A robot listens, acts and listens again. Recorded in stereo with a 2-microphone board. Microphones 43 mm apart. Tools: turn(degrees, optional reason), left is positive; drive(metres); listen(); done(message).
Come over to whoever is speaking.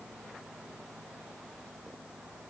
listen()
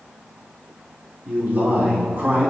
turn(degrees=-45, reason="The man speaking: about 45° right or 135° right.")
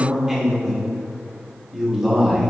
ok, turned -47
turn(degrees=-10, reason="So it is at 10° right.")
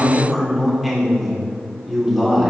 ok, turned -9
drive(metres=1.0)
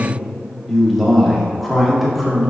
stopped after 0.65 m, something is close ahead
done("I am next to the man speaking.")